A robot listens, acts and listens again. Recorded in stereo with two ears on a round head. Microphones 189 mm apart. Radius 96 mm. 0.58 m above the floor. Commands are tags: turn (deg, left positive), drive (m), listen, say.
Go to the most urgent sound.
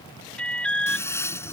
<turn deg="30"/>
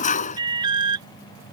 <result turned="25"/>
<turn deg="-20"/>
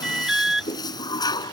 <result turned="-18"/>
<drive m="1.0"/>
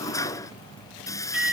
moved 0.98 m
<drive m="1.0"/>
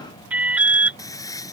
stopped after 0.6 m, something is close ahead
<say>Arrived at the alarm, straight ahead.</say>